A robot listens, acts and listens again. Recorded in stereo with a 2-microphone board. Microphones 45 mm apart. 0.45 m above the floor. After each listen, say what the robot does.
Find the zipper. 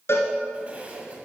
Turn 30° right.
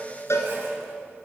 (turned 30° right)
Keep listening.
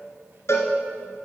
Keep listening.
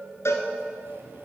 Turn 115° right.
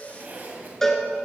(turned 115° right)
Turn 45° right.
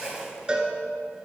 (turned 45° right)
Turn 15° right.
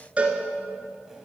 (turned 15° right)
Keep listening.
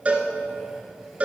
Keep listening.
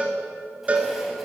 Facing where the zipper came from. I can't hear it now.